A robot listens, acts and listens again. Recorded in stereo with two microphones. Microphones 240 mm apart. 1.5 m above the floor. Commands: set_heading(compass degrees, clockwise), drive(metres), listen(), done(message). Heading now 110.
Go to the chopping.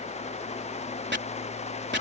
set_heading(155)
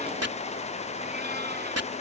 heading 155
set_heading(240)
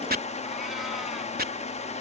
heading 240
set_heading(280)
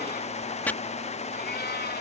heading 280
drive(1.0)
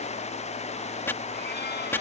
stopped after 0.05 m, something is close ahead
set_heading(270)
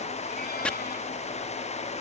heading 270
done("Blocked. The chopping is further on, straight ahead.")